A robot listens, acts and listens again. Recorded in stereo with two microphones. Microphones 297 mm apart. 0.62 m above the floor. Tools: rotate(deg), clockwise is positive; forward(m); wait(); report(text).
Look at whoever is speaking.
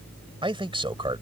rotate(15)
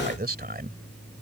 rotate(150)
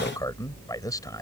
rotate(-15)
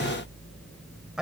report("Facing the man speaking.")